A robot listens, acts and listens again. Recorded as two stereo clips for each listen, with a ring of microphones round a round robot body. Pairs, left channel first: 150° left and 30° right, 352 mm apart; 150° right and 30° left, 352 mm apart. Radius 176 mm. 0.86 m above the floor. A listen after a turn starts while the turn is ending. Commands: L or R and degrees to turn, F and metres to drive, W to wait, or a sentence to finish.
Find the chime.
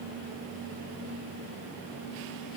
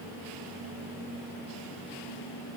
W
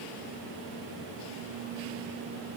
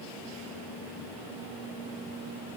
W
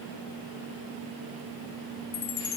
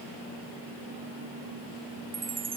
L105
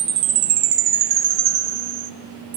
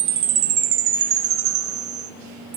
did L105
R15
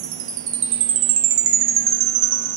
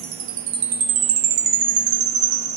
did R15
Found it: a chime, straight ahead.